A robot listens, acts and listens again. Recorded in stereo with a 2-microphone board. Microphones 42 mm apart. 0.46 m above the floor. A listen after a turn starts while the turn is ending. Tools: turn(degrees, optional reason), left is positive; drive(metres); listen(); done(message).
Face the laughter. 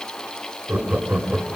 turn(degrees=-35, reason="The laughter: about 35° right or 145° right.")
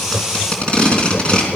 turn(degrees=10, reason="So it is at 10° left.")
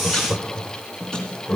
turn(degrees=20, reason="The laughter is now 20° left.")
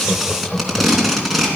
turn(degrees=10, reason="The laughter is now 10° left.")
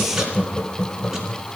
turn(degrees=20, reason="The laughter is now 20° left.")
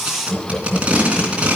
done("Found it: laughter, straight ahead.")